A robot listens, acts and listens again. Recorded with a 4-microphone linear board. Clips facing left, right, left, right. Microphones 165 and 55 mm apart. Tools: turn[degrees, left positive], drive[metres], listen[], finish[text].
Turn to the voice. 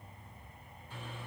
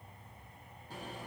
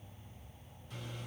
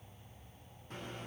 Action: listen[]
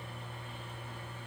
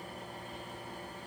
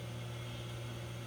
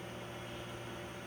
Action: listen[]
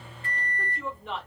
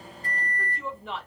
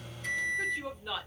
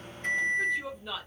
Action: turn[30]
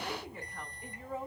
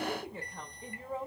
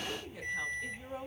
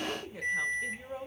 Thought: So it is at 30° right.
Action: turn[-30]
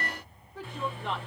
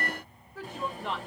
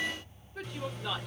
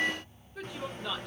Action: finish[Found it: a woman speaking, straight ahead.]